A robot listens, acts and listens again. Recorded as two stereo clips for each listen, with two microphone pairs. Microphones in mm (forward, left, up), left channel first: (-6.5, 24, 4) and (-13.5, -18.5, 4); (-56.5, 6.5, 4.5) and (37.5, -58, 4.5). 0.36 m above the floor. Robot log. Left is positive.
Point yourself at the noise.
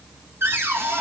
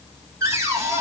note: The cupboard door: 100° right.
cmd yaw -100
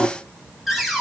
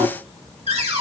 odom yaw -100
note: The cupboard door is now 10° right.
cmd yaw -10
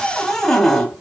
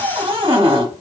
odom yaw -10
end: Facing the cupboard door.